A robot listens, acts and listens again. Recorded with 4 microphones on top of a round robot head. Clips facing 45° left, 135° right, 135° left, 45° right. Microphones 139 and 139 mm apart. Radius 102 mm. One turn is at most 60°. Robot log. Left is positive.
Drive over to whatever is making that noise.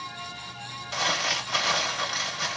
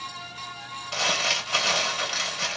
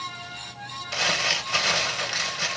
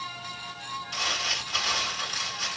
note: The crumpling: 145° left.
cmd yaw +60
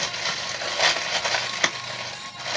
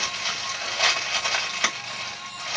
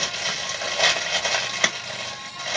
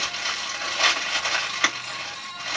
note: The crumpling is now 85° left.
cmd yaw +60
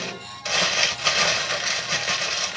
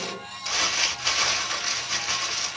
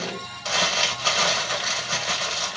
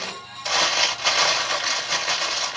note: The crumpling is now 35° left.
cmd yaw +35
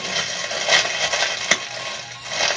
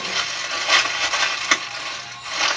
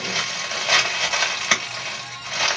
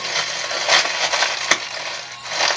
cmd fwd 1.0
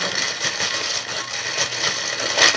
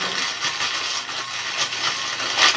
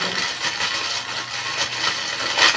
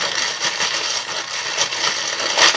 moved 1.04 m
cmd fwd 1.0
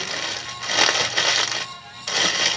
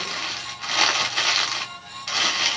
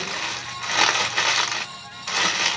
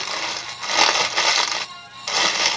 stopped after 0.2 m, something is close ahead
note: The crumpling is now 10° left.
cmd yaw +10
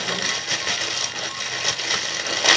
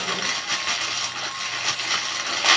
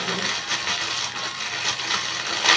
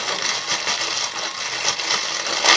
end: I am next to the crumpling.